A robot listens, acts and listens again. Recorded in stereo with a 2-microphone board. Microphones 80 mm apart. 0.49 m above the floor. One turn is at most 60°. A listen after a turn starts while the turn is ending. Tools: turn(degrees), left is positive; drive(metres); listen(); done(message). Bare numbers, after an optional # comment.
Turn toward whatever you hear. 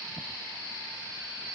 listen()
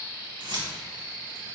# The keys jangling: about 65° right or 115° right.
turn(-60)
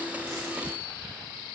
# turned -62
listen()
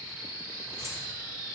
listen()
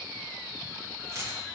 # So it is at 40° right.
turn(-40)
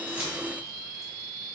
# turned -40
listen()
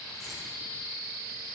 listen()
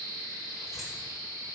done("I heard keys jangling from this way, but can't make it out now.")